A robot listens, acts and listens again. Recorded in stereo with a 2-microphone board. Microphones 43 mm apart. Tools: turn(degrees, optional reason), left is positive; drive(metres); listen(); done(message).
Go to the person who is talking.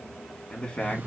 turn(degrees=20, reason="The man speaking: about 20° left or 160° left.")
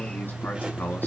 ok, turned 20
turn(degrees=135, reason="So it is at 135° left.")
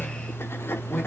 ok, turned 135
listen()
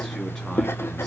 listen()
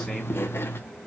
done("I heard a man speaking from this way, but can't make it out now. I did not reach it.")